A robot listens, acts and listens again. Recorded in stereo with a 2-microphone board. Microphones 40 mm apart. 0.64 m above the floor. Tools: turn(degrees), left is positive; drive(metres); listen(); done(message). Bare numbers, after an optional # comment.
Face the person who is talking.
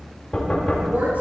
# The woman speaking: about 45° right or 135° right.
turn(-45)
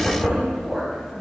done("Facing the woman speaking, 2 to 4 m away.")